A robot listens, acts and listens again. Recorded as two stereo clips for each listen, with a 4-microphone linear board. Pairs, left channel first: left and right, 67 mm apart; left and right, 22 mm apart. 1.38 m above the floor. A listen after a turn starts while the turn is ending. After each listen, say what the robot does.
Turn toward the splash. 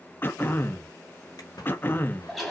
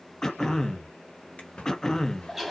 Turn 90° left.
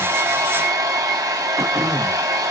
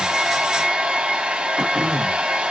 I heard a splash from this way, but can't make it out now.